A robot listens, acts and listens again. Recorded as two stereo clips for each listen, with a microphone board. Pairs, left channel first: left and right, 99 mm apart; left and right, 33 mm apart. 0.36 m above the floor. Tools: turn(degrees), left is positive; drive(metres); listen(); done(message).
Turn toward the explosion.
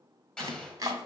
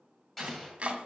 turn(degrees=30)
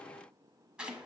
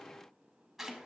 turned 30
listen()
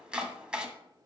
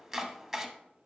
done("I heard an explosion, but can't make it out now. It was about 20° right or 140° left.")